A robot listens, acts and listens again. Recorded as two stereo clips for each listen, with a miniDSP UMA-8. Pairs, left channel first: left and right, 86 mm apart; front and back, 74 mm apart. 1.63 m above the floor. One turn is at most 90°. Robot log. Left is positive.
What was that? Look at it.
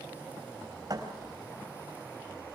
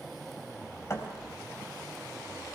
note: The thud: 50° right.
cmd yaw -50
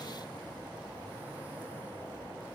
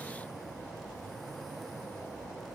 end: Facing where the thud came from. I can't hear it now.